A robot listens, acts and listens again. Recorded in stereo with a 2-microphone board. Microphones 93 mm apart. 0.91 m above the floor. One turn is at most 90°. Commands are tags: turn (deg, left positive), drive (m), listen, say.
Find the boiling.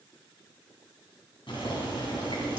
<turn deg="65"/>
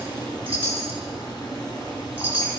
<turn deg="50"/>
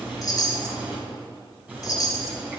<turn deg="-15"/>
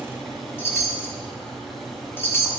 <say>Facing the boiling.</say>